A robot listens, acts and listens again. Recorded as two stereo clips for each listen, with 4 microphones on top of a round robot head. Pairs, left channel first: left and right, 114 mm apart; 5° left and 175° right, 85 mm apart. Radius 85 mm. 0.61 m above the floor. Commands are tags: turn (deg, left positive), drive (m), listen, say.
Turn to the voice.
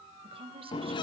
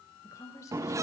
<turn deg="-55"/>
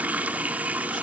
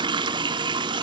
<listen/>
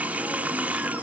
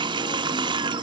<listen/>
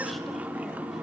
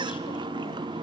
<say>Facing where the woman speaking came from. I can't hear it now.</say>